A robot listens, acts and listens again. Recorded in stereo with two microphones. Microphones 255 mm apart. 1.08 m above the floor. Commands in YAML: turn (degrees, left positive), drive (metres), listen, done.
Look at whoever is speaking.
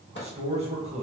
turn: -25
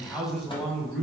done: "Found it: a man speaking, straight ahead, 1 to 2 m away."